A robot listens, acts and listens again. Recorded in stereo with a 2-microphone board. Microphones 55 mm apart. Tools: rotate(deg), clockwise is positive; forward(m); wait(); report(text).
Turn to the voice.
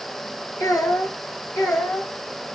rotate(-60)
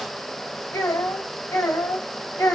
rotate(-80)
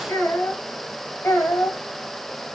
rotate(-45)
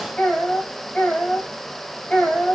rotate(-10)
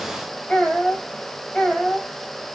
report("Facing the child speaking, 2 to 4 m away.")